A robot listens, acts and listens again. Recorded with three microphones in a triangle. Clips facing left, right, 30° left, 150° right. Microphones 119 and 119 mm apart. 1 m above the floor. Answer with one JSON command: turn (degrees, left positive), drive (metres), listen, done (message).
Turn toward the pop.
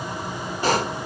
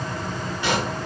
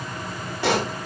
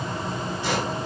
{"turn": 40}
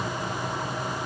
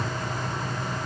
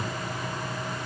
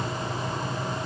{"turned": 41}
{"done": "Facing where the pop came from. I can't hear it now."}